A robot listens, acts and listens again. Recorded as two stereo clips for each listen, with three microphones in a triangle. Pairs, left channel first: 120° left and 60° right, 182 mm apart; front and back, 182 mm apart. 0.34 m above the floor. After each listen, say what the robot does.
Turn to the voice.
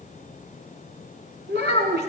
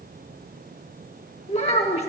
Turn 50° right.
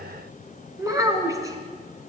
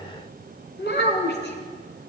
Turn 10° left.
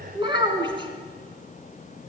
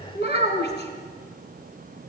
Facing the child speaking.